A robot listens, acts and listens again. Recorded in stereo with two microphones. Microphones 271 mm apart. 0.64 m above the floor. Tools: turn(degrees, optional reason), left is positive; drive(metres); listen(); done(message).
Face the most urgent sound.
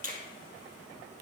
listen()
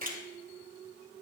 listen()
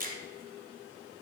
done("I can't make out anything urgent, only a finger snap.")